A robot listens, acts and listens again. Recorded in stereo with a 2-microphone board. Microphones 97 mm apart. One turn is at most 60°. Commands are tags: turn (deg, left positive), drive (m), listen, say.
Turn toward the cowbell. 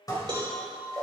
<turn deg="-45"/>
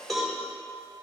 <say>Facing the cowbell.</say>